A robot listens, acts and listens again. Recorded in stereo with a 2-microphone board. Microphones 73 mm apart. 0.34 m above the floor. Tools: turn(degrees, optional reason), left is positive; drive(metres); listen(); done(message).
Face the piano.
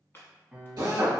turn(degrees=-30)
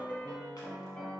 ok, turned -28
turn(degrees=15, reason="So it is at 15° left.")
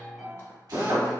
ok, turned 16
done("Found it: a piano, straight ahead, under 1 m away.")